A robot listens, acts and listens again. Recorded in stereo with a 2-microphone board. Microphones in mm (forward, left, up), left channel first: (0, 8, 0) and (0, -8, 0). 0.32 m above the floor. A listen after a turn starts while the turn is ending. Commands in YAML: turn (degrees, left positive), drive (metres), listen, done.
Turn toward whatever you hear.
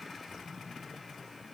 listen: true
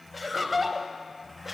turn: -30
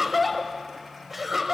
turn: -15
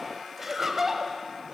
turn: -25
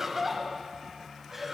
turn: -20
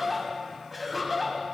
turn: 30
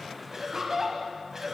turn: -25
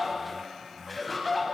turn: 10
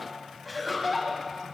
done: "Facing the laughter, 1 to 2 m away."